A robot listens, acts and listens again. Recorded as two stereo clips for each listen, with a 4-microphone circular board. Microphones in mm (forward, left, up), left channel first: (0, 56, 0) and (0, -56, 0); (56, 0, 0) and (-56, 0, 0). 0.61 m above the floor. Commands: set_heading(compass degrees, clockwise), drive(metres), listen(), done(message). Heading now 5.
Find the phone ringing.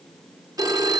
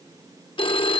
set_heading(40)
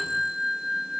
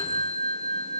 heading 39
done("Facing the phone ringing, under 1 m away.")